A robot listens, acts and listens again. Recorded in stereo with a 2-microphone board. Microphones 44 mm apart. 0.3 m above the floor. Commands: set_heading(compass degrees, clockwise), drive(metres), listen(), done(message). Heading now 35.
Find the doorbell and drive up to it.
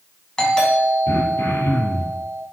set_heading(20)
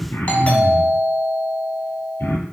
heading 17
set_heading(227)
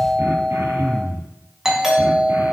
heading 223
set_heading(233)
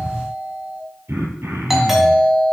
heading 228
drive(1.0)
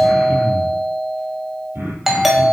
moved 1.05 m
drive(1.0)
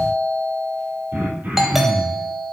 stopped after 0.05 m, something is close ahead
set_heading(238)
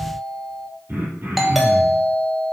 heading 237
done("I am next to the doorbell.")